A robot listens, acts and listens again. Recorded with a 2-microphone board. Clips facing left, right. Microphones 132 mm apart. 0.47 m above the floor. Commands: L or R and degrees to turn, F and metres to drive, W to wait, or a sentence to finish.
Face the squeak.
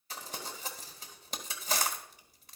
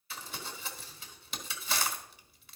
W
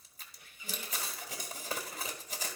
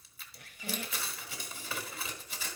R70
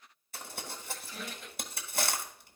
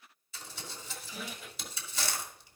Found it: a squeak, straight ahead.